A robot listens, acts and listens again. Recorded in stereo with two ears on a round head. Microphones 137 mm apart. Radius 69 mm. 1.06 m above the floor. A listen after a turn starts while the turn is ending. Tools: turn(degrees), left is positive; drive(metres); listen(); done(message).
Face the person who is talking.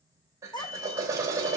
turn(degrees=30)
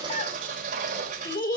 turn(degrees=120)
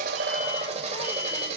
listen()
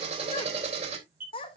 turn(degrees=35)
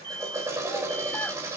listen()
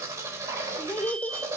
turn(degrees=10)
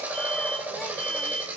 listen()
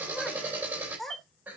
done("Found it: a child speaking, straight ahead.")